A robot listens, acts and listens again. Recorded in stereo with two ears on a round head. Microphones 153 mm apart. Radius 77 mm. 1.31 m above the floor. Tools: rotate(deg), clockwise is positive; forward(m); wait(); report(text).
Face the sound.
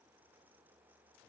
wait()
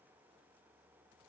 wait()
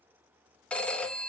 rotate(-30)
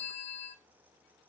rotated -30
rotate(-145)
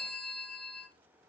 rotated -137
report("Facing the phone ringing, 1 to 2 m away.")